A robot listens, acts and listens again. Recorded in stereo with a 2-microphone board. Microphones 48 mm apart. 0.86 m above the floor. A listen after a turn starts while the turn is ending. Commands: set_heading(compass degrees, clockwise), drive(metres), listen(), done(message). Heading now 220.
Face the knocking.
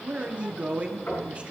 set_heading(170)
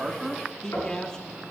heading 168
set_heading(88)
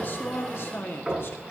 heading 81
done("Facing the knocking.")